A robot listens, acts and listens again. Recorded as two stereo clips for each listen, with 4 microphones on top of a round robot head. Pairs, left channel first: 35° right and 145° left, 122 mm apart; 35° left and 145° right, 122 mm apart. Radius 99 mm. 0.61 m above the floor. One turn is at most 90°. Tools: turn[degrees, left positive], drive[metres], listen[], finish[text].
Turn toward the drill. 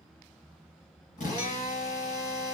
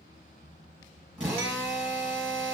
Thought: The drill: 60° right.
Action: turn[-60]
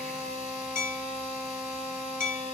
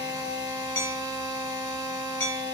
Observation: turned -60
Action: finish[Facing the drill.]